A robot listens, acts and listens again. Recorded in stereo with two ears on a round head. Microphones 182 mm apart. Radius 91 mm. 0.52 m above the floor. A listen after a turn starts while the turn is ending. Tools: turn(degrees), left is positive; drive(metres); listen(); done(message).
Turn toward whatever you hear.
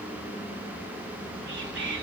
turn(degrees=-60)
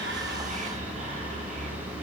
turn(degrees=-40)
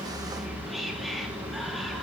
done("Found it: whispering, straight ahead.")